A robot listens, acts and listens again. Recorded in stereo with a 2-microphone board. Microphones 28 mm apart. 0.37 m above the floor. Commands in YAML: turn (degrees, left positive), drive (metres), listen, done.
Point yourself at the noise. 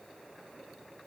listen: true
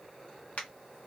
turn: 65
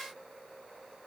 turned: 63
listen: true
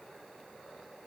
done: "I heard a crack, but can't make it out now. It was about 5° left or 50° left."